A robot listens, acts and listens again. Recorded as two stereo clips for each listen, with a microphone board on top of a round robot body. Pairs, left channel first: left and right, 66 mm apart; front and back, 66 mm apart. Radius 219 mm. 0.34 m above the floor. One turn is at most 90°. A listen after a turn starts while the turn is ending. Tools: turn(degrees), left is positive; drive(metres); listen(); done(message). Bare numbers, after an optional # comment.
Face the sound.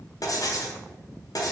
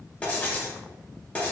# The writing: 70° left.
turn(70)
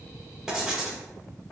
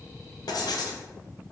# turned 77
# The writing is now 10° right.
turn(-10)
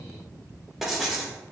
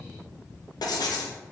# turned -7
done("Facing the writing.")